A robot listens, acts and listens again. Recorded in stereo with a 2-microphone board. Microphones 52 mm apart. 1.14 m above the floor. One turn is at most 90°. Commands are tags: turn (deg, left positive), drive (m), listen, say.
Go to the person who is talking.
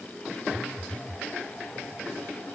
<listen/>
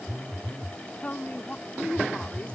<turn deg="30"/>
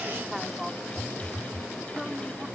<drive m="1.0"/>
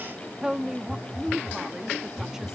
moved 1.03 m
<turn deg="-10"/>
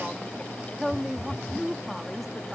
<drive m="1.0"/>
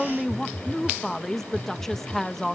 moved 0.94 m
<drive m="1.0"/>
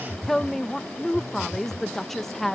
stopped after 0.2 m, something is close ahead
<turn deg="10"/>
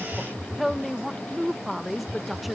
<say>I am next to the woman speaking.</say>